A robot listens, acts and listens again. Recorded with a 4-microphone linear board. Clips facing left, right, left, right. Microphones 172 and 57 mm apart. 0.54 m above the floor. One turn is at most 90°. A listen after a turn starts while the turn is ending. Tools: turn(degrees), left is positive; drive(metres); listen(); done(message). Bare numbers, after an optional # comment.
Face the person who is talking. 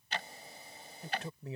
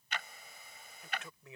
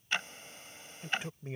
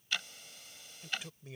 # The man speaking: about 35° left or 145° left.
turn(35)
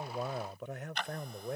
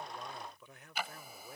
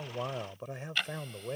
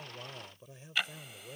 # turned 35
# So it is at 105° left.
turn(90)
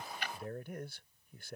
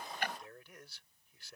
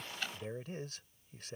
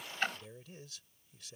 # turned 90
# The man speaking is now 50° left.
turn(50)
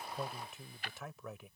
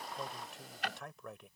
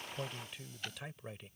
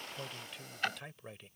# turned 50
done("Found it: a man speaking, straight ahead.")